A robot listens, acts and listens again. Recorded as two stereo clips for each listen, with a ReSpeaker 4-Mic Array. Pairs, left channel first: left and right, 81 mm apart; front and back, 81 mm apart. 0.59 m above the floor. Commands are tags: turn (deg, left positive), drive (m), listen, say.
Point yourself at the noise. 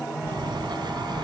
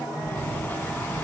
<turn deg="-70"/>
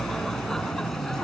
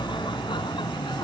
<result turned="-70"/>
<say>Facing the laughter.</say>